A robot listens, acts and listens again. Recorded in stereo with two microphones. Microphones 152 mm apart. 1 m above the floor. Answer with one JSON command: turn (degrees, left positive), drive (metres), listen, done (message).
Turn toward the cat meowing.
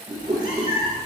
{"turn": 65}
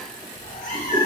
{"turn": 65}
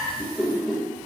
{"turn": 10}
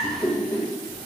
{"turn": 10}
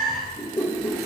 {"done": "Facing the cat meowing, over 4 m away."}